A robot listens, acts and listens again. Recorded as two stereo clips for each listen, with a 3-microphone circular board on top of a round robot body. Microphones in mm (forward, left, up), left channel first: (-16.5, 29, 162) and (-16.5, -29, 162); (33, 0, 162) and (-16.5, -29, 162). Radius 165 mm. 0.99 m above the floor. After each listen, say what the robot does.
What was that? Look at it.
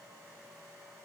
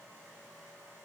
Keep listening.
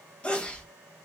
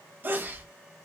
Turn 160° left.
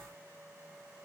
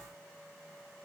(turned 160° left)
I heard a sneeze from this way, but can't make it out now.